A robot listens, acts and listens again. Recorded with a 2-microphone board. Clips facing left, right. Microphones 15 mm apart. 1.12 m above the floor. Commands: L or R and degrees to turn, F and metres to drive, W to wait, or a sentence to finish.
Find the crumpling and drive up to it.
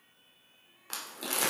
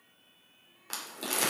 R30
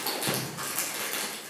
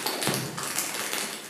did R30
R145
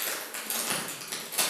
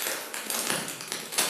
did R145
R30
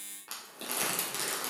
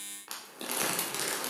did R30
R15
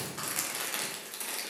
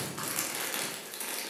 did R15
F1.0
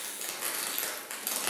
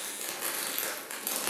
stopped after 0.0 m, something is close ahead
Blocked. The crumpling is further on, straight ahead.